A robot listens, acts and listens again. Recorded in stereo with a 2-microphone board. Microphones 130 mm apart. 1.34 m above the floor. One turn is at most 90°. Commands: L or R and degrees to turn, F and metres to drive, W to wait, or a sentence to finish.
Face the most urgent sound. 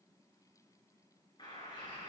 W
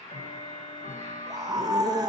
R30
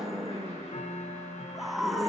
Found it: a scream, straight ahead, 1 to 2 m away.